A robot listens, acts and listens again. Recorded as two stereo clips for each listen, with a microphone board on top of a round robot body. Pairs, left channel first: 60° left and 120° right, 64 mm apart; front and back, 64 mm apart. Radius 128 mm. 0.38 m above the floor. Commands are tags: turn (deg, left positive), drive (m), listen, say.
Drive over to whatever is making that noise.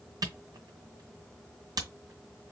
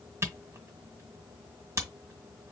<turn deg="-135"/>
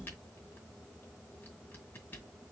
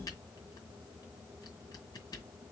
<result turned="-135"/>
<listen/>
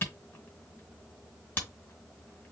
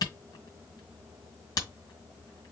<drive m="1.0"/>
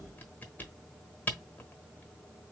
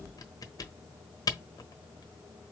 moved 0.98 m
<drive m="1.0"/>
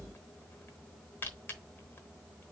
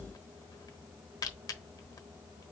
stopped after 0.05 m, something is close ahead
<say>I am next to the camera shutter.</say>